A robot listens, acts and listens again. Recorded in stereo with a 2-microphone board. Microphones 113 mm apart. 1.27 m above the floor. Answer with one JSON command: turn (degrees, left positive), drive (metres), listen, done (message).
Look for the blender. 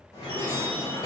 {"listen": true}
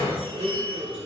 {"turn": -90}
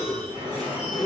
{"done": "Facing the blender, under 1 m away."}